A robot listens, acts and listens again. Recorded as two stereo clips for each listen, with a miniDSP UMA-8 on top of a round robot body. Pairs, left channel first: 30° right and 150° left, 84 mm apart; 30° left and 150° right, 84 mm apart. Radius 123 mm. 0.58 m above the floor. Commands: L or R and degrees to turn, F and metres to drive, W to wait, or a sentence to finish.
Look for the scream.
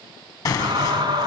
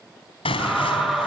L120
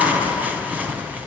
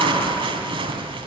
W
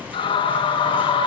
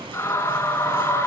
R30
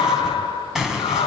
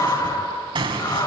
R20
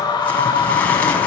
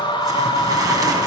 Found it: a scream, straight ahead, over 4 m away.